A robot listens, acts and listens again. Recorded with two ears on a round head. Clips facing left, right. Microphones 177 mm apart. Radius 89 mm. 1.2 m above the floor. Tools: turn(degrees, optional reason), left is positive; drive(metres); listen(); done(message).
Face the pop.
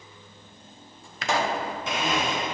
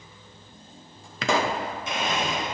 turn(degrees=-65, reason="The pop: about 65° right or 115° right.")
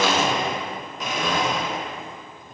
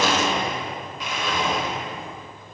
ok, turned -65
listen()
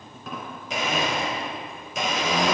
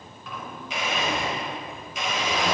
done("I heard a pop, but can't make it out now. It was about straight ahead or 50° right.")